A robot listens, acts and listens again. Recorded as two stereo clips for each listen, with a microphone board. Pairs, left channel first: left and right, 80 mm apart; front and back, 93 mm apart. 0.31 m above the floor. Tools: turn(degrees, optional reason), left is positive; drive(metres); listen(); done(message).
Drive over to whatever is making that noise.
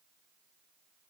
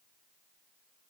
listen()
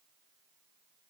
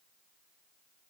listen()
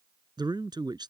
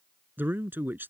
turn(degrees=-115, reason="The man speaking: 115° right.")
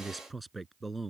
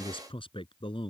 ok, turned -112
drive(metres=1.0)
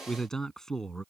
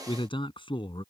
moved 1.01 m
drive(metres=1.0)
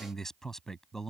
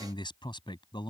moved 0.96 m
drive(metres=1.0)
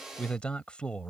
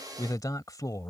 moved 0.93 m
turn(degrees=20, reason="The man speaking is now 20° left.")
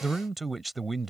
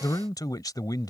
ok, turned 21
drive(metres=1.0)
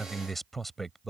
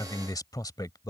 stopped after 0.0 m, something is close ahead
done("I am next to the man speaking.")